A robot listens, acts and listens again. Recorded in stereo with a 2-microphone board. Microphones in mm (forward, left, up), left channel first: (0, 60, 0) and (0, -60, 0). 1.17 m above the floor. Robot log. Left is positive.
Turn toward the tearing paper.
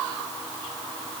cmd idle
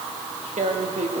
note: The tearing paper: about 70° right or 110° right.
cmd yaw -70
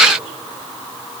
cmd idle
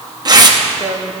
note: So it is at 35° right.
cmd yaw -35
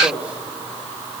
cmd idle
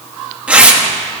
note: The tearing paper is now 10° right.
cmd yaw -10
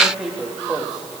cmd idle
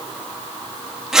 end: Facing the tearing paper.